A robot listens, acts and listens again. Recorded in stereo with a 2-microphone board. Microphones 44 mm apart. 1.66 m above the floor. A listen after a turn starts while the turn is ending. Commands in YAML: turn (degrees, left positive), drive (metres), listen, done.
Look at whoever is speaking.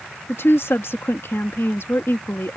turn: 70
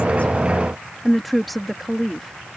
done: "Found it: a woman speaking, straight ahead."